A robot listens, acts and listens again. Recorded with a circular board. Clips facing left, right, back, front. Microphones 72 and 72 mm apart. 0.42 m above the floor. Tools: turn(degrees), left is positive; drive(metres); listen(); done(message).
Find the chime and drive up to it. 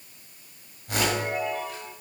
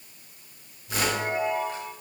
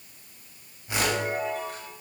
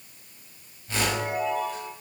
turn(degrees=-145)
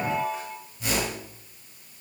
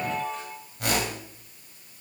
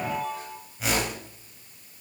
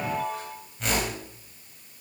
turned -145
turn(degrees=10)
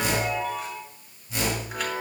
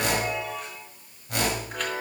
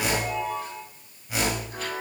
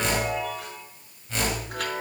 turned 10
drive(metres=1.0)
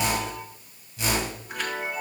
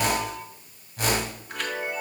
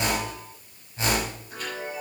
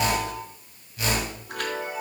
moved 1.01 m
drive(metres=1.0)
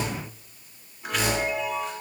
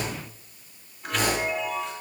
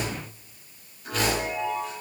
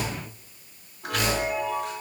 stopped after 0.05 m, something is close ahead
done("Something is in my way. I am facing the chime but have not reached it.")